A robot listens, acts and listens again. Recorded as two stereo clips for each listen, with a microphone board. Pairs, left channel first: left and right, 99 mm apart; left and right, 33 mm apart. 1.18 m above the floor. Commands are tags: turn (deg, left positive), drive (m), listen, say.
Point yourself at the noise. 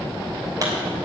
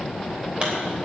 <turn deg="-35"/>
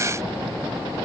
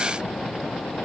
<listen/>
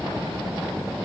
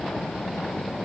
<say>I heard a pop, but can't make it out now. It was about straight ahead or 110° right.</say>